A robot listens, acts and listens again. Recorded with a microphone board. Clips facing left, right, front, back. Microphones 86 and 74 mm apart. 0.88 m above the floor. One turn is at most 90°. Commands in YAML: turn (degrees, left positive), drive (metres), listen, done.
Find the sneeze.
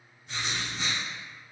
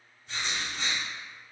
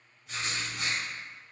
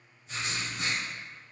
listen: true
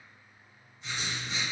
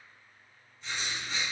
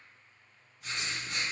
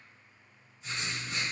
listen: true
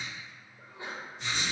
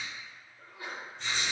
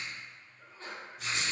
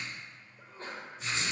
turn: 90
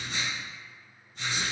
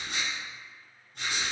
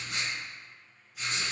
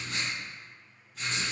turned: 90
turn: 60
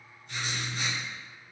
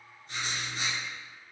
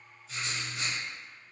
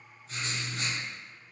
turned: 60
done: "Facing where the sneeze came from. I can't hear it now."